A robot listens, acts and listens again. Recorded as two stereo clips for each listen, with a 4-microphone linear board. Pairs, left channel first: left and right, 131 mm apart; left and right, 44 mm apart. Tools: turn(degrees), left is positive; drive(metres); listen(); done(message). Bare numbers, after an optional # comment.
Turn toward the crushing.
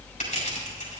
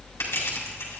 # The crushing: about 70° left or 110° left.
turn(70)
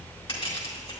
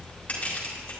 # So it is at 40° left.
turn(40)
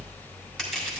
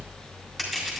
done("Facing the crushing, 2 to 4 m away.")